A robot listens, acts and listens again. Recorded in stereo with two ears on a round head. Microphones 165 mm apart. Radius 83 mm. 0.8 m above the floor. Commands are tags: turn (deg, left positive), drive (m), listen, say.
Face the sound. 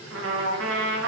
<turn deg="-70"/>
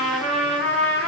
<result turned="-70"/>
<say>Facing the trumpet, under 1 m away.</say>